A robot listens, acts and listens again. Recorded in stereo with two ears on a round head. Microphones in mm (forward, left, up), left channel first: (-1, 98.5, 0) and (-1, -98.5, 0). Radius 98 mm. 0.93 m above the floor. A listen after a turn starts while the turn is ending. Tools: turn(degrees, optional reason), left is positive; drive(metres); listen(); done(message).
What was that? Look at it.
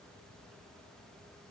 listen()
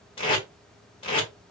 turn(degrees=25, reason="The tape being pulled: about 25° left or 155° left.")
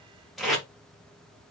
done("Facing the tape being pulled.")